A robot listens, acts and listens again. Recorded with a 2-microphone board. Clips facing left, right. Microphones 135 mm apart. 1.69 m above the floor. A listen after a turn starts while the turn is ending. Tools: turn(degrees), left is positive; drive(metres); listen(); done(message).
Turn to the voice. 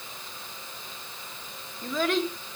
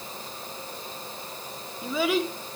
turn(degrees=-30)
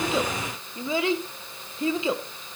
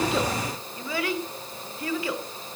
turn(degrees=25)
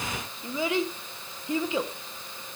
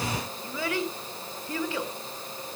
turn(degrees=20)
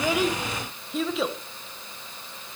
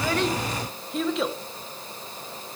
done("Found it: a child speaking, straight ahead, 1 to 2 m away.")